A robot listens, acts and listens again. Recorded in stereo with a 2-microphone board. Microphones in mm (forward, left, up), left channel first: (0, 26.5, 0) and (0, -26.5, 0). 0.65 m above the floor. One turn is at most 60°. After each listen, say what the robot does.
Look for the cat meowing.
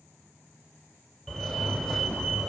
Keep listening.
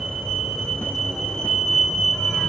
Keep listening.
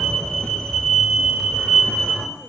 I can't make out a cat meowing, only a fire alarm.